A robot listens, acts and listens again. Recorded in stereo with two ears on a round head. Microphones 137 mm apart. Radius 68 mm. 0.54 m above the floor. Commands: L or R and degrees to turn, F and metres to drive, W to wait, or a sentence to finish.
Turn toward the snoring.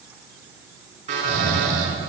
R90
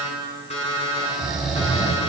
Found it: snoring, straight ahead, 2 to 4 m away.